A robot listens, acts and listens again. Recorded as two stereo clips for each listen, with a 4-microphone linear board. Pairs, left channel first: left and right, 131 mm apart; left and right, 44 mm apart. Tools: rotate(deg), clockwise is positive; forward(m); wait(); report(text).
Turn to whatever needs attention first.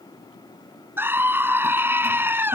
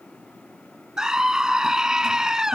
rotate(15)
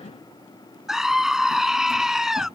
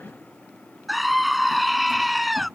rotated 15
report("Found it: a scream, straight ahead.")